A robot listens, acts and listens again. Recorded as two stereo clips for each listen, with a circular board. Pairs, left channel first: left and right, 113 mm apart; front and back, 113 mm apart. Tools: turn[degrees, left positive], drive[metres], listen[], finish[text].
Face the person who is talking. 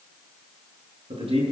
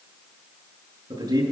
Thought: The man speaking: 130° right.
Action: turn[-130]
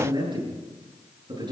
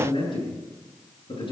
Thought: The man speaking is now 45° right.
Action: turn[-45]
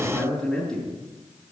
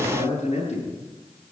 Action: finish[Facing the man speaking, over 4 m away.]